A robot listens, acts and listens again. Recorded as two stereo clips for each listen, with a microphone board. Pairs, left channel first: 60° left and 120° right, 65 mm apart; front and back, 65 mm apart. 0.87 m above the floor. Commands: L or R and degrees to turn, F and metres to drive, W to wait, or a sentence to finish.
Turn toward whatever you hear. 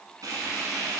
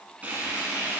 R115
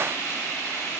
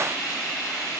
L15
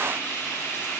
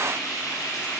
Found it: frying, straight ahead.